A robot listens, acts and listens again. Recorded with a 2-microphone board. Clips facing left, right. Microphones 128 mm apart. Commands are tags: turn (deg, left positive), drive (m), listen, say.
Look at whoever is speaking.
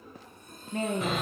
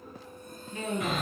<turn deg="55"/>
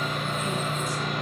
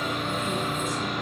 <listen/>
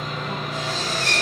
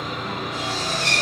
<listen/>
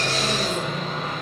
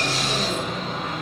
<say>I heard a woman speaking, but can't make it out now. It was about straight ahead or 70° left.</say>